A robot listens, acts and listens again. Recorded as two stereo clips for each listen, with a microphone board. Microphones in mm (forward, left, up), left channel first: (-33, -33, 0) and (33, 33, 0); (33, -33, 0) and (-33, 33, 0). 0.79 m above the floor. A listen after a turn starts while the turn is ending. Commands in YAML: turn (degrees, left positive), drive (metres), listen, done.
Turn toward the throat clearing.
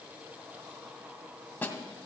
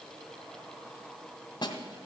listen: true
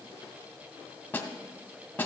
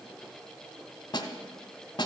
listen: true
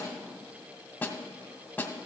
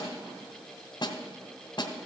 done: "I can't make out throat clearing, only a snare drum."